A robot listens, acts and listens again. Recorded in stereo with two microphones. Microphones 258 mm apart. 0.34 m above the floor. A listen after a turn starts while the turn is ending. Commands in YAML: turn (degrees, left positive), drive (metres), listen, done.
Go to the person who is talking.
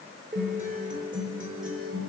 listen: true
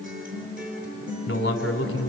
turn: 50
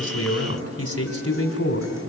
turn: 75
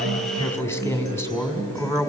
turn: 10
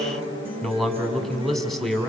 drive: 1.0
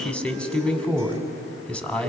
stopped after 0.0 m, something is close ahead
done: "Something is in my way. I am facing the man speaking but have not reached it."